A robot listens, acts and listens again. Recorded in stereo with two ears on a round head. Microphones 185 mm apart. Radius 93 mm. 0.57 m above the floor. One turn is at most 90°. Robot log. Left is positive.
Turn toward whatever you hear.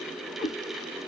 note: The cat meowing: about 45° left or 135° left.
cmd yaw +45
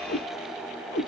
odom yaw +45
note: So it is at 90° left.
cmd yaw +90
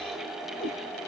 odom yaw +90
end: Facing the cat meowing, 2 to 4 m away.